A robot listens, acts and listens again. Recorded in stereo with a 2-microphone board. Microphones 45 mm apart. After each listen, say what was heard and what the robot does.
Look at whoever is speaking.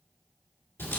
Keep listening.
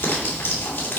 Keep listening.
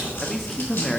Turn 30° left.
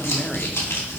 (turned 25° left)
Keep listening.
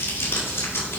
Keep listening.
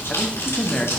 So it is at 150° left. Turn 150° left.
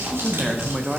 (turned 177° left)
The man speaking is now 25° right. Turn 25° right.
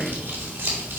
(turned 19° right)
Keep listening.
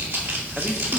Keep listening.
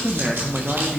Found it: a man speaking, straight ahead.